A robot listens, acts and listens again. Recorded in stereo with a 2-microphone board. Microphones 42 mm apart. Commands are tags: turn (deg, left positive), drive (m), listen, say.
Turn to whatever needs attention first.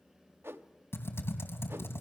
<listen/>
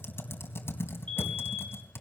<turn deg="25"/>
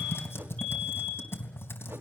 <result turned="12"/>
<turn deg="15"/>
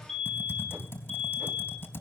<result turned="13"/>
<say>Facing the fire alarm.</say>